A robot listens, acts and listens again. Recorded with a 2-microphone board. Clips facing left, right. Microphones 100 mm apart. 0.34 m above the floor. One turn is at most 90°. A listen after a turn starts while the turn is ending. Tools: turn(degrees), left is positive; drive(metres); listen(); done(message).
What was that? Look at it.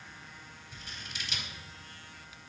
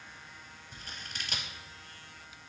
turn(degrees=-50)
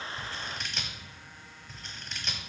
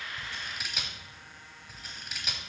done("Found it: scissors, straight ahead, under 1 m away.")